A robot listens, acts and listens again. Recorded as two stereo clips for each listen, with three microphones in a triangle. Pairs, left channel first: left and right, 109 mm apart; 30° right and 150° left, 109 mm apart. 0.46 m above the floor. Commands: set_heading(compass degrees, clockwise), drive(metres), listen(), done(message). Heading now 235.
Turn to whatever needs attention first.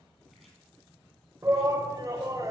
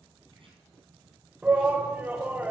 set_heading(15)
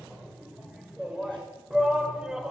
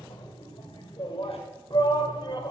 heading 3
set_heading(13)
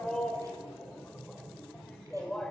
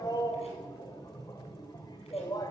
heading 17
done("Found it: a shout, straight ahead.")